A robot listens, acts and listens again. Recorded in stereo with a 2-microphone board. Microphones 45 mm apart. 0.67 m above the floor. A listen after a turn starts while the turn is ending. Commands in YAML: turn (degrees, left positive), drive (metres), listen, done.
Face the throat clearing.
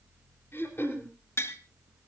turn: 60
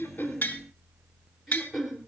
done: "Facing the throat clearing."